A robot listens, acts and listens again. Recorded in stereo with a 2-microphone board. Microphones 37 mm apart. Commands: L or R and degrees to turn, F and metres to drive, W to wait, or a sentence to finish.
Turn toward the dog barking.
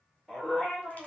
L30
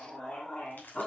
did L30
L165
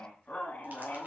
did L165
L60
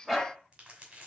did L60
Facing the dog barking.